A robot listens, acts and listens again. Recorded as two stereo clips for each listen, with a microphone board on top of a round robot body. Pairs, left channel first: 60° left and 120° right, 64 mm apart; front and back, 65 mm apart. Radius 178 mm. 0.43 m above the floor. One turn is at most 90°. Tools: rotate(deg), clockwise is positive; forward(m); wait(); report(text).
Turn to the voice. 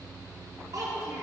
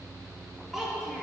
rotate(90)
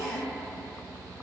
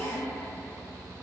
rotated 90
rotate(10)
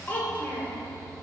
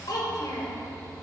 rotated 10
report("Found it: a child speaking, straight ahead, 1 to 2 m away.")